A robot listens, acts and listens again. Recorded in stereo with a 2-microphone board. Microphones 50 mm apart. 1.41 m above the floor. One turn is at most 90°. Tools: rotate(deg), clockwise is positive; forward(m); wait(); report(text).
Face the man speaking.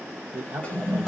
rotate(90)
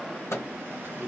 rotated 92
rotate(10)
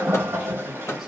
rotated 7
wait()
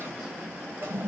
wait()
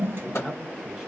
report("Facing the man speaking, 1 to 2 m away.")